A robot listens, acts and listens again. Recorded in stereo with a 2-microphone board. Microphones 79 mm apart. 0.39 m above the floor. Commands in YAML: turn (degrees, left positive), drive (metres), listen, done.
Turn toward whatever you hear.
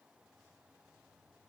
listen: true
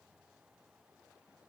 listen: true
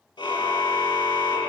turn: 70
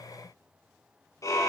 turn: 40
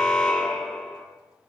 turn: 10
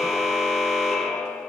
done: "Facing the car horn, over 4 m away."